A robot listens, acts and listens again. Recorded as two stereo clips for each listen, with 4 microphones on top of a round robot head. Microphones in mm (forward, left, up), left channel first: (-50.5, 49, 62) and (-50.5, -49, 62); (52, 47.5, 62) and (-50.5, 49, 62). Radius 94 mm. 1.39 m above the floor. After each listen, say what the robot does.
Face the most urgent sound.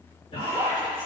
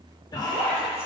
Turn 50° left.
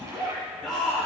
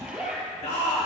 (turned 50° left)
Found it: a shout, straight ahead, 2 to 4 m away.